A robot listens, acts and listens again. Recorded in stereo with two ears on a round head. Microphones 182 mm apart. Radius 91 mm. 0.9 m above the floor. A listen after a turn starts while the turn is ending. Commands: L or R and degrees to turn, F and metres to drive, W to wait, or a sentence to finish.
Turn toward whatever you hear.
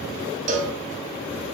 R35
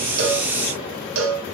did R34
R110
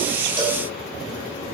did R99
R10
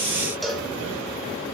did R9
Facing the cowbell.